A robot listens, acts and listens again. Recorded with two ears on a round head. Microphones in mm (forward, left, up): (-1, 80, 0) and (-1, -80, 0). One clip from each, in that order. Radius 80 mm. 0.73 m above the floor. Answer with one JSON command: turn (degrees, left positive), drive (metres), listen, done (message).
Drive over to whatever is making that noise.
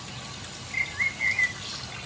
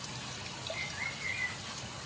{"turn": 90}
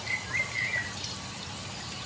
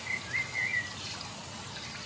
{"drive": 1.0}
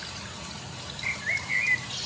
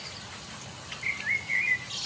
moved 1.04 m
{"turn": -10}
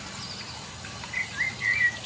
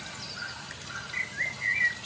{"drive": 1.0}
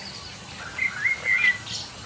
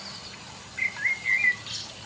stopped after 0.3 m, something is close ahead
{"done": "Arrived at the bird, straight ahead."}